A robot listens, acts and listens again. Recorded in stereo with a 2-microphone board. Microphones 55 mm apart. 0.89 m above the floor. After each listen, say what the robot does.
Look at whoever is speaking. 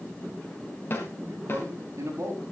Turn 60° right.
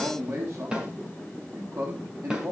Turn 60° right.
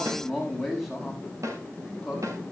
Found it: a man speaking, straight ahead, over 4 m away.